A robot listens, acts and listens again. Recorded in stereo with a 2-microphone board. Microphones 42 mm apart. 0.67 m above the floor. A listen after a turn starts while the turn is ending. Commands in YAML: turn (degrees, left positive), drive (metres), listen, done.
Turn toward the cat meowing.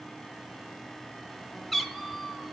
turn: -30
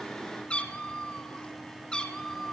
turn: 10
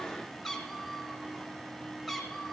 done: "Found it: a cat meowing, straight ahead."